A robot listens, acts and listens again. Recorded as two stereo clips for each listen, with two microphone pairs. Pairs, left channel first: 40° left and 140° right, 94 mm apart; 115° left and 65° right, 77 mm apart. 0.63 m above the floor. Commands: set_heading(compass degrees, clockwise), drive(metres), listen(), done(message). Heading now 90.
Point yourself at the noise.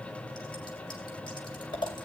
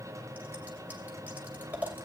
done("Found it: scissors, straight ahead, 2 to 4 m away.")